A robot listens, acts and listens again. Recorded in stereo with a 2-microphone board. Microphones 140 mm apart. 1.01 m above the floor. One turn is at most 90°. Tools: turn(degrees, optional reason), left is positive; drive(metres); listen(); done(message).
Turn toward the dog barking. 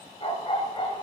turn(degrees=35, reason="The dog barking: about 35° left or 145° left.")
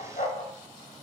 turn(degrees=90, reason="So it is at 120° left.")
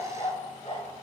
turn(degrees=50, reason="The dog barking is now 50° left.")
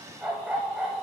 done("Found it: a dog barking, straight ahead.")